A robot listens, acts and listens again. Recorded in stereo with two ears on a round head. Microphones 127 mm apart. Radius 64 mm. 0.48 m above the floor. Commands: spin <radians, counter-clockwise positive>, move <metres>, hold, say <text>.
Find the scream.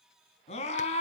spin 0.87
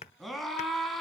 say Facing the scream.